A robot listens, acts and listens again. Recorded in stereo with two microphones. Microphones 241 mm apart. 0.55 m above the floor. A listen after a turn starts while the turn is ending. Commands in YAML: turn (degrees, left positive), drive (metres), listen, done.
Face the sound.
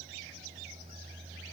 listen: true
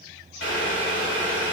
turn: 70
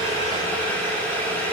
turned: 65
done: "Facing the boiling."